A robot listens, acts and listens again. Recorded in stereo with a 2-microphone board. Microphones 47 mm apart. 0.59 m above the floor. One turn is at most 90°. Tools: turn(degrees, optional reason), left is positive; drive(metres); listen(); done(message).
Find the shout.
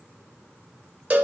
listen()
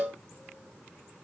listen()
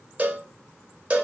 done("I can't make out a shout to turn to.")